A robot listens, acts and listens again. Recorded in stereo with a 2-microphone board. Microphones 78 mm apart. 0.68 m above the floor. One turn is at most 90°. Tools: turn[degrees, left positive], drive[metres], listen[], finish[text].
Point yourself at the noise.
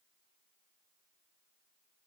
Action: listen[]
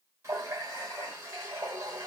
Thought: The running tap: about 40° right or 140° right.
Action: turn[-40]
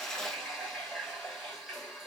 Action: finish[Found it: a running tap, straight ahead, 1 to 2 m away.]